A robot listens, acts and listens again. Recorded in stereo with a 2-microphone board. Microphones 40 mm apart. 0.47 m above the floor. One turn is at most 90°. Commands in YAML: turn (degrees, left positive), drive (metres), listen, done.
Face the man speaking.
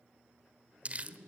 turn: -60
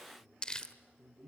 done: "Found it: a man speaking, straight ahead."